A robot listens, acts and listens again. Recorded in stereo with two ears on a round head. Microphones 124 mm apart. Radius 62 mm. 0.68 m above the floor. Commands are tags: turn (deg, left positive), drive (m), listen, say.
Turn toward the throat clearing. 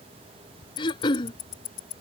<turn deg="35"/>
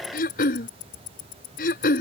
<turn deg="110"/>
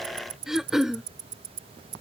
<say>Facing the throat clearing.</say>